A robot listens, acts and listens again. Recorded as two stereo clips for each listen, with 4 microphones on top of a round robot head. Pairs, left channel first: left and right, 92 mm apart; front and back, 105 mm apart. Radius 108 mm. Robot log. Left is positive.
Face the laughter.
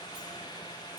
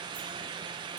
cmd idle
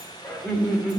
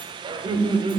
note: The laughter: 175° left.
cmd yaw +175
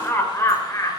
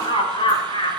note: The laughter is now 35° left.
cmd yaw +35
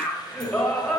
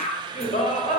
note: The laughter is now 10° left.
cmd yaw +10
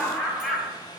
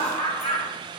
end: Facing the laughter, 2 to 4 m away.